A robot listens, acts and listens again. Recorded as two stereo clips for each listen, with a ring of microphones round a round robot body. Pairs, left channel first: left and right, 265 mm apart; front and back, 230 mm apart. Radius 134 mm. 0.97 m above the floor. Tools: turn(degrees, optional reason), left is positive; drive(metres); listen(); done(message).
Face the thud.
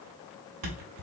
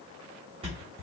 turn(degrees=-110, reason="The thud: 110° right.")
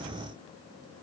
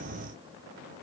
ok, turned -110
done("Facing where the thud came from. I can't hear it now.")